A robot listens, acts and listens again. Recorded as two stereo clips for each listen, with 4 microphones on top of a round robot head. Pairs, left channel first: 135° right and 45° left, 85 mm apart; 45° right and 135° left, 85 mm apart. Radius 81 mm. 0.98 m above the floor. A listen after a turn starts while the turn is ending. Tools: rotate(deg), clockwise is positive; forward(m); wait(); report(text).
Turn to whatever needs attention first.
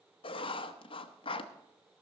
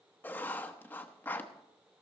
wait()
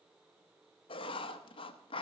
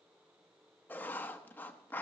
wait()
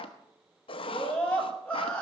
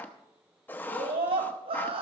rotate(-145)
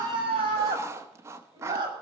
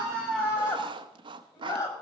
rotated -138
report("Found it: a scream, straight ahead.")